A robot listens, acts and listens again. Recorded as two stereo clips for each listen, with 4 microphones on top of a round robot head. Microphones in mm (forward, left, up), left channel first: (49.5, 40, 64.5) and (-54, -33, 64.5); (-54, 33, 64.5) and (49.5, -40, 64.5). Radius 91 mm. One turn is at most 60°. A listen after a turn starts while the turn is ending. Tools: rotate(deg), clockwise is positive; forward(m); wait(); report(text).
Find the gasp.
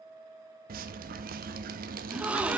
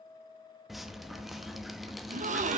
rotate(60)
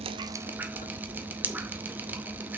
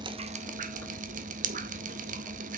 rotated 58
report("Facing where the gasp came from. I can't hear it now.")